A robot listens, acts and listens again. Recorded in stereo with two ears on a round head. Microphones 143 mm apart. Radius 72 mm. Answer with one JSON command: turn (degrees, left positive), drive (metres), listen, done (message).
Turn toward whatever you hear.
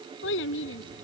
{"turn": 90}
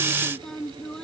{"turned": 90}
{"done": "Found it: a child speaking, straight ahead."}